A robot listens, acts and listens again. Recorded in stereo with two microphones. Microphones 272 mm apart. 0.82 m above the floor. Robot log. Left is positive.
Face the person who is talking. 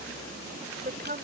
note: The woman speaking: about 35° right or 145° right.
cmd yaw -35
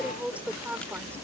end: Facing the woman speaking.